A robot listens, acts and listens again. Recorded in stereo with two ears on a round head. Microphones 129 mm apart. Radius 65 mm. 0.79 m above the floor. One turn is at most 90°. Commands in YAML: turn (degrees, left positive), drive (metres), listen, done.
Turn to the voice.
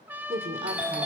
turn: -45
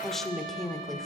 done: "Found it: a woman speaking, straight ahead."